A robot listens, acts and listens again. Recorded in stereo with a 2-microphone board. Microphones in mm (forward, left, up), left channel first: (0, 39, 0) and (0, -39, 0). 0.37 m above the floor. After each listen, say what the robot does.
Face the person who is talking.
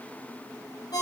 Keep listening.
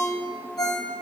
Keep listening.
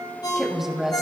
Turn 30° right.
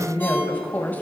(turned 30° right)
Turn 30° left.
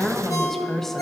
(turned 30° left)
Facing the woman speaking, 2 to 4 m away.